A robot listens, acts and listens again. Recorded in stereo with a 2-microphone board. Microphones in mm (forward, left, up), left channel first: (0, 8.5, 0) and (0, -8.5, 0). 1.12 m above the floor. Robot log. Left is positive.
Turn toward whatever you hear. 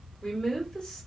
note: The woman speaking: about 65° left or 115° left.
cmd yaw +65
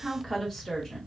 note: So it is at 25° left.
cmd yaw +25
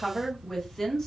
note: The woman speaking is now 25° left.
cmd yaw +25
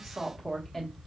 note: The woman speaking is now 15° left.
cmd yaw +15
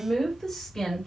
note: The woman speaking is now 20° left.
cmd yaw +20
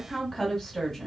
end: Found it: a woman speaking, straight ahead, 1 to 2 m away.